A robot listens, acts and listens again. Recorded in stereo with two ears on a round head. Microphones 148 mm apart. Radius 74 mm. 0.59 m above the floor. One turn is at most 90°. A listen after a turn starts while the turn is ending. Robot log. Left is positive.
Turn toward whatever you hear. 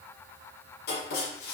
note: The writing: about 65° left or 115° left.
cmd yaw +65
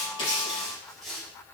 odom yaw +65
end: Facing the writing, over 4 m away.